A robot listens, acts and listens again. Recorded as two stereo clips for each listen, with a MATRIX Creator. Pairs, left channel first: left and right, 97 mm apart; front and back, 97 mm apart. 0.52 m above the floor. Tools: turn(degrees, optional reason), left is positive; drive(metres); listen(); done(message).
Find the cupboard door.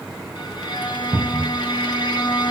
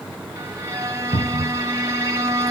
turn(degrees=-20, reason="The cupboard door: 20° right.")
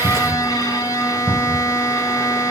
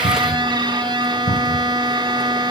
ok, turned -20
done("Facing the cupboard door.")